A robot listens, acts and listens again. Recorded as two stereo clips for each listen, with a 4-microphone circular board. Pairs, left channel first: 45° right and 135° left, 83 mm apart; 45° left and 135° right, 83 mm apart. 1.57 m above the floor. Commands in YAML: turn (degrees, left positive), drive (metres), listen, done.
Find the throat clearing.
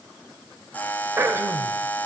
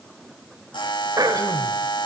turn: -170
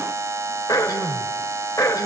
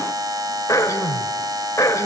done: "Found it: throat clearing, straight ahead."